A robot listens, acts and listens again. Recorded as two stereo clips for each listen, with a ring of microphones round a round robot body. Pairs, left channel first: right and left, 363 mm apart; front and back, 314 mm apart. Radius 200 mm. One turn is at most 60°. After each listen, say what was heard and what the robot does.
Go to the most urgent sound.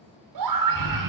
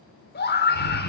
The scream: 60° left. Turn 60° left.
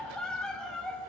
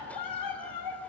Drive 1.0 m forward.
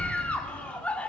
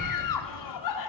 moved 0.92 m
Drive 1.0 m forward.
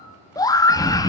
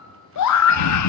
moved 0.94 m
The scream is now 10° right. Turn 10° right.
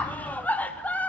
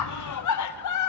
Drive 1.0 m forward.
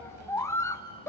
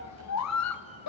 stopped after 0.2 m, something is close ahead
The scream is now 10° right. Turn 10° right.
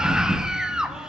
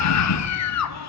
Arrived at the scream, straight ahead.